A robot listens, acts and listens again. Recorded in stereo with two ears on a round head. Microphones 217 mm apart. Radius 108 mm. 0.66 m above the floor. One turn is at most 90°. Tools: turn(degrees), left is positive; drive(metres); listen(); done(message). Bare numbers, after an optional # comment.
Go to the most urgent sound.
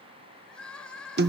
turn(30)
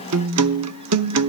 listen()
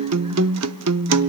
listen()
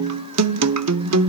done("I heard crying, but can't make it out now. It was about 25° right or 145° left. I did not reach it.")